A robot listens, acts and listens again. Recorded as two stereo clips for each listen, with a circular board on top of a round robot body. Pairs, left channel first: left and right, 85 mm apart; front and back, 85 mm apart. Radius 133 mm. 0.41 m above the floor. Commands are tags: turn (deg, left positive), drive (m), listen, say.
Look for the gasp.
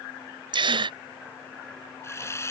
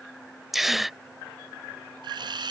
<turn deg="-95"/>
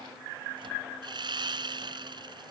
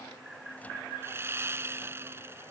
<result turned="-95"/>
<say>I heard a gasp from this way, but can't make it out now.</say>